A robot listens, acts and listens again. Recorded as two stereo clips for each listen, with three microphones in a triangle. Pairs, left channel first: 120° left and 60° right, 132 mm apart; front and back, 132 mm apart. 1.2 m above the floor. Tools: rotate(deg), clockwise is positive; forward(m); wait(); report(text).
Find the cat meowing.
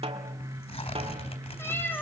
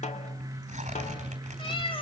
rotate(-45)
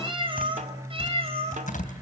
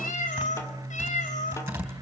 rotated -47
rotate(20)
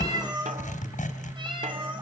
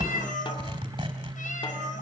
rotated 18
rotate(10)
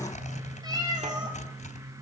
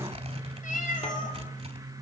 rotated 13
report("Found it: a cat meowing, straight ahead, over 4 m away.")